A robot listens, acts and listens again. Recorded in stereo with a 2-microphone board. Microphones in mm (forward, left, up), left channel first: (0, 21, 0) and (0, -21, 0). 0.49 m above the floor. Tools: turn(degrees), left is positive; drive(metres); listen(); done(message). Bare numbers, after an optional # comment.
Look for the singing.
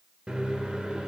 listen()
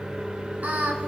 # The singing: about 50° right or 130° right.
turn(-50)
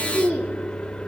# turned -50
# So it is at 65° right.
turn(-65)
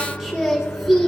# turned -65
done("Found it: singing, straight ahead, 1 to 2 m away.")